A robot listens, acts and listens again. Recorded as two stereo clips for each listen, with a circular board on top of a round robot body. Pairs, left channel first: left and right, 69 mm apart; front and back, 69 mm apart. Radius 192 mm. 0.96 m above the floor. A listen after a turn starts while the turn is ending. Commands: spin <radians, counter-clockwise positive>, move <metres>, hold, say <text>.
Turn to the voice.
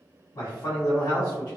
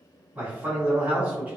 spin 1.92
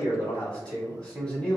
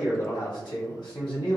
spin 0.17
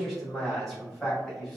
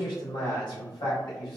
say Facing the man speaking, 1 to 2 m away.